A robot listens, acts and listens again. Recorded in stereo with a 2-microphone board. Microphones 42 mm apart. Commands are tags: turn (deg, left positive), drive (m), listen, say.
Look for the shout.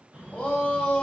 <turn deg="25"/>
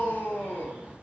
<turn deg="130"/>
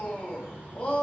<turn deg="35"/>
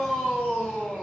<turn deg="10"/>
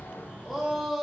<say>Found it: a shout, straight ahead, 1 to 2 m away.</say>